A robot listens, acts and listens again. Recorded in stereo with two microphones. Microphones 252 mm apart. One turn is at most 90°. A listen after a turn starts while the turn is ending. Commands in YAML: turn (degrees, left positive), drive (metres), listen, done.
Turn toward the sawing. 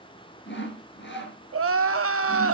turn: 45
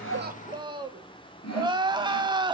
turn: 90
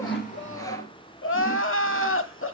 turn: 15
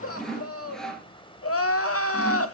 done: "Found it: sawing, straight ahead."